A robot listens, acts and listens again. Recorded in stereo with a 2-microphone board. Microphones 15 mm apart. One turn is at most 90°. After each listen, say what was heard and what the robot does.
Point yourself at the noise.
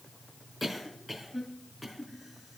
Turn 30° right.
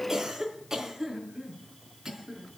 So it is at 145° right. Turn 90° right.
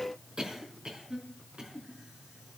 The cough is now 65° right. Turn 65° right.
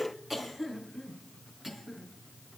The cough is now 15° right. Turn 15° right.
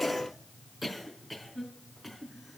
Found it: a cough, straight ahead, over 4 m away.